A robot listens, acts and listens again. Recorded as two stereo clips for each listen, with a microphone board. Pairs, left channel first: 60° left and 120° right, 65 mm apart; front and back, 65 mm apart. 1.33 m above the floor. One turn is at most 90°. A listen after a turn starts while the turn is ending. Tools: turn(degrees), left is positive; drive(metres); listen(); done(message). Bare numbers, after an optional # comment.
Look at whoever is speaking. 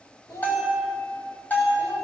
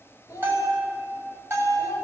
# The child speaking: 40° left.
turn(40)
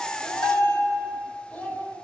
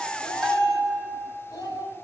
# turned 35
done("Found it: a child speaking, straight ahead, over 4 m away.")